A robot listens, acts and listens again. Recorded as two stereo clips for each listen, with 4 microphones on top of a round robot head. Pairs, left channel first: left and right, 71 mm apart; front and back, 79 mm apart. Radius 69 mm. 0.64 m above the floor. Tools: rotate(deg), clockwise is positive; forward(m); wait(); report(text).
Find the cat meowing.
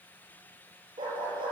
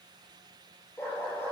wait()
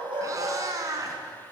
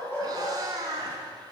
rotate(125)
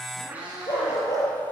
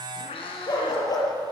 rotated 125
rotate(10)
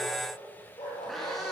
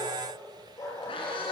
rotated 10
report("Facing the cat meowing, over 4 m away.")